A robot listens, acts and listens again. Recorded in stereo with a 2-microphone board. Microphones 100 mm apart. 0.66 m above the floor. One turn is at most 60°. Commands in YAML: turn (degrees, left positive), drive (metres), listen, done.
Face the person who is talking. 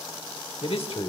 turn: 60
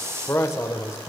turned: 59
turn: 30
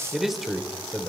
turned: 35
done: "Facing the man speaking."